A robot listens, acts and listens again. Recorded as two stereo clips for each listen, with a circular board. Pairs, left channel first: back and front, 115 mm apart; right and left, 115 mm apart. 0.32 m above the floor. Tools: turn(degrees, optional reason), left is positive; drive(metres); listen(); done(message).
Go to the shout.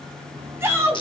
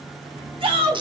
turn(degrees=65, reason="The shout: 65° left.")
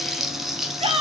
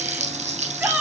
turn(degrees=15, reason="The shout is now 15° left.")
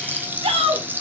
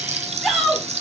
drive(metres=1.0)
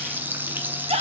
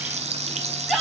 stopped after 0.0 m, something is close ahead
done("Blocked. The shout is further on, straight ahead.")